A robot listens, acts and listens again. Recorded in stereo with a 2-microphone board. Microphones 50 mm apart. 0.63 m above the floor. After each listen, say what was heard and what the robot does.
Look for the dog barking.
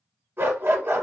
The dog barking: about 45° right or 135° right. Turn 45° right.
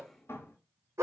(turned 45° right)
So it is at 90° right. Turn 90° right.
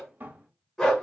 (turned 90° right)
The dog barking is now 10° left. Turn 10° left.
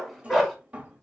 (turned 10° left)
Found it: a dog barking, straight ahead.